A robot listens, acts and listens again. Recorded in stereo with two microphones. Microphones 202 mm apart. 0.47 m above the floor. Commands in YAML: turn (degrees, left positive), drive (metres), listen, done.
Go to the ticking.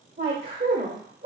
listen: true
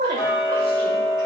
turn: 40
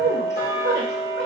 turn: 90
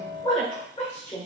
turn: -25
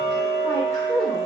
drive: 1.0
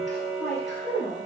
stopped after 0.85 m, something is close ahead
done: "Arrived at the ticking, straight ahead."